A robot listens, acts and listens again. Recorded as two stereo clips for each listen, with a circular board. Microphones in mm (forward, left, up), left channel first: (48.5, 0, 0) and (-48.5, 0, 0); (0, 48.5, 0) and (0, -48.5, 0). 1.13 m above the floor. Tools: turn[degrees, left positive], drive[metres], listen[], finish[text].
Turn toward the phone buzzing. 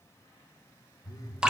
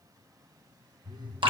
Thought: The phone buzzing: 50° right.
Action: turn[-50]
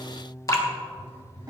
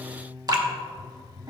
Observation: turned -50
Action: finish[Facing the phone buzzing, under 1 m away.]